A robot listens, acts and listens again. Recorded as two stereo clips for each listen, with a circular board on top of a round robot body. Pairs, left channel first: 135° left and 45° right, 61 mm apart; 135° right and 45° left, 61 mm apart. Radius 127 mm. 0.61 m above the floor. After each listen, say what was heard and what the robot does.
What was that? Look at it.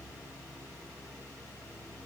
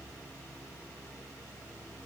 Keep listening.
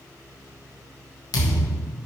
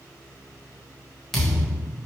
The thud: 140° left. Turn 140° left.
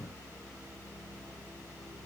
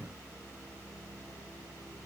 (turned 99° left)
Nothing new. It was at 40° left. Turn 40° left.
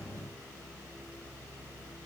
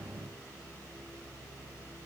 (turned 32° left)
Nothing new. It was at 10° left. Turn 10° left.
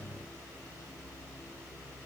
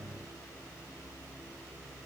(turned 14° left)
I heard a thud from this way, but can't make it out now.